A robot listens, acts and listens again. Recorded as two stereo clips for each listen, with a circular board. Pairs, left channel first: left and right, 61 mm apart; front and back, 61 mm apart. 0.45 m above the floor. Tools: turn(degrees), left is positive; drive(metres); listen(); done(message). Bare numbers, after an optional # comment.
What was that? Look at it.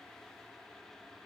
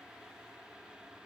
listen()
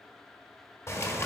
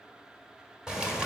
# The bird: 105° left.
turn(105)
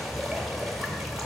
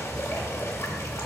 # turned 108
done("Found it: a bird, straight ahead.")